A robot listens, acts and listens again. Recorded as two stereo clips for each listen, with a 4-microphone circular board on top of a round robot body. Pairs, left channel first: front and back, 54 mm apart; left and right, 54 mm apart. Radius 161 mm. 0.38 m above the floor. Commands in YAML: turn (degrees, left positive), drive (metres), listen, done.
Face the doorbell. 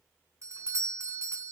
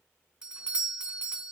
turn: -165
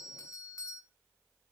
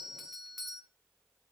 done: "Facing the doorbell."